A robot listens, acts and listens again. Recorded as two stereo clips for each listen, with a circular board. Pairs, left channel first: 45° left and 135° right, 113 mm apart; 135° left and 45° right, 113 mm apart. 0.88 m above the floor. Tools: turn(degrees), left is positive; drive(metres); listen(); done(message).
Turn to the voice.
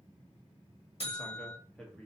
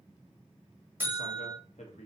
turn(degrees=130)
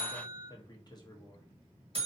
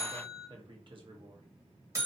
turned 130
done("Found it: a man speaking, straight ahead.")